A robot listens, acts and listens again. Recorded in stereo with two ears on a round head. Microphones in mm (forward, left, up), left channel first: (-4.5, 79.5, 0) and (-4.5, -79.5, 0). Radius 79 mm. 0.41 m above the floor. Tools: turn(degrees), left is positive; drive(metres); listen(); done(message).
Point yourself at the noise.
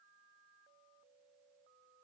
listen()
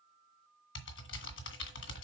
turn(degrees=90)
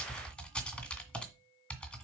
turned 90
done("Found it: typing on a keyboard, straight ahead, 2 to 4 m away.")